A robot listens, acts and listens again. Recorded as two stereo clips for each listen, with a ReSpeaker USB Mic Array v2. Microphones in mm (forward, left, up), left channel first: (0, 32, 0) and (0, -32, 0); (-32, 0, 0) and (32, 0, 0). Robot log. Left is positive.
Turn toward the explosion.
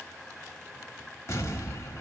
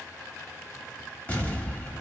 note: The explosion: 120° left.
cmd yaw +120
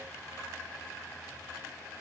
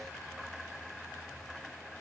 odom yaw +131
note: Nothing new. It was at 15° right.
cmd yaw -15
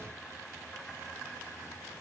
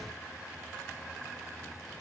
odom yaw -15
end: Facing where the explosion came from. I can't hear it now.